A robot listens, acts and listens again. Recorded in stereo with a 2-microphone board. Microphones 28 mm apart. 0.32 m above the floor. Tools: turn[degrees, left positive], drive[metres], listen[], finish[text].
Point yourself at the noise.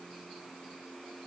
Action: listen[]
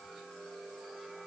Action: listen[]
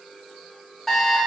Action: turn[30]
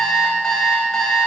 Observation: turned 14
Thought: So it is at 155° left.
Action: turn[155]
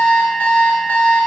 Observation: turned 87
Thought: The alarm clock is now 65° left.
Action: turn[65]
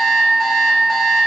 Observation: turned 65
Action: finish[Found it: an alarm clock, straight ahead.]